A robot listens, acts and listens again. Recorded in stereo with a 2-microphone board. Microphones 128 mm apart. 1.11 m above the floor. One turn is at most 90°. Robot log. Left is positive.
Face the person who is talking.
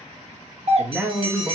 cmd yaw -30
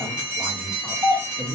cmd yaw -30
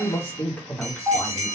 note: So it is at 10° left.
cmd yaw +10
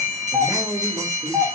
cmd idle
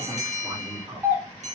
note: The man speaking is now 20° right.
cmd yaw -20
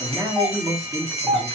end: Facing the man speaking.